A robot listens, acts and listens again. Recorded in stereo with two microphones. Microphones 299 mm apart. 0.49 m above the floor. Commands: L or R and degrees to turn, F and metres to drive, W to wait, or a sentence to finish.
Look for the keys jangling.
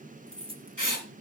R15
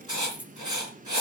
Found it: keys jangling, straight ahead.